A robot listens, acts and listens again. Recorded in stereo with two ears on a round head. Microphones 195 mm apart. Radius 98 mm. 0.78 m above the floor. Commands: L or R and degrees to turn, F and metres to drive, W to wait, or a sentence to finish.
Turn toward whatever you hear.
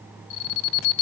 L65
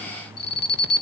L50
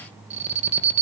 R30
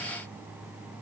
W
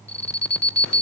Found it: an alarm, straight ahead.